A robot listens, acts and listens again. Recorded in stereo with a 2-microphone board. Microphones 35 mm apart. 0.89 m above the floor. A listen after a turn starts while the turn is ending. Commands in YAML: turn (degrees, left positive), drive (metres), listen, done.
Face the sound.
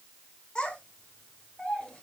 turn: 20
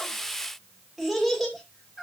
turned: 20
done: "Facing the child speaking."